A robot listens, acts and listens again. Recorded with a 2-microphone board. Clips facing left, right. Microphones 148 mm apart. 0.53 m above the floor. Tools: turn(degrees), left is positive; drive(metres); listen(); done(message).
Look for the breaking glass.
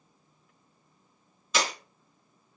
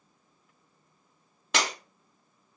turn(degrees=-90)
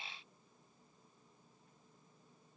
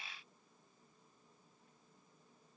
done("Facing where the breaking glass came from. I can't hear it now.")